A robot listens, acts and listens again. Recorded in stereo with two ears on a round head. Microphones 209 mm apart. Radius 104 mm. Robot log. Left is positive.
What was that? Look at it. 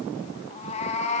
note: The cat meowing: about 30° left or 150° left.
cmd yaw +30
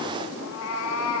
note: So it is at 115° left.
cmd yaw +115
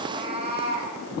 note: The cat meowing is now 25° right.
cmd yaw -25
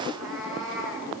end: Facing the cat meowing.